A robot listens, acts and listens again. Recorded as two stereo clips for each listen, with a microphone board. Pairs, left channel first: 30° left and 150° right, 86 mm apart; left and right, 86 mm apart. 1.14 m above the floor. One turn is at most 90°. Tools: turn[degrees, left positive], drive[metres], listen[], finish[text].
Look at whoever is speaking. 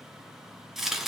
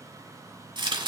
Action: listen[]
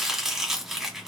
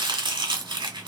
Action: listen[]
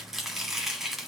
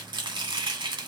Action: finish[I can't make out anyone speaking to turn to.]